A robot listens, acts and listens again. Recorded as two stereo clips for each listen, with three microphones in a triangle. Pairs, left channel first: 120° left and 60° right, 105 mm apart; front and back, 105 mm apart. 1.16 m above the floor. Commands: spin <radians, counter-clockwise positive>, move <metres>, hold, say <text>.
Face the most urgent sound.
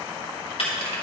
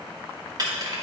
hold
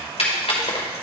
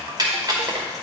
hold
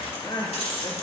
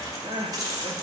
spin 2.79
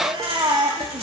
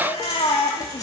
spin -0.35
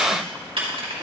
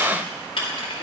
hold
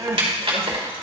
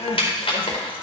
say Found it: crying, straight ahead.